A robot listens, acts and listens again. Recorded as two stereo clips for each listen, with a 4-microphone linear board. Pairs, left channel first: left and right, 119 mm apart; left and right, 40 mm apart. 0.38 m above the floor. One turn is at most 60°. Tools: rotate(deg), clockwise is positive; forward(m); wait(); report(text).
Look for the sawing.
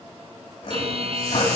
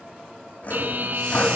rotate(-45)
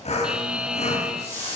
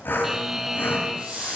rotate(-60)
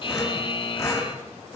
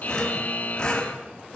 rotate(-30)
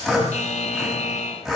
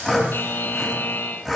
report("Found it: sawing, straight ahead, 2 to 4 m away.")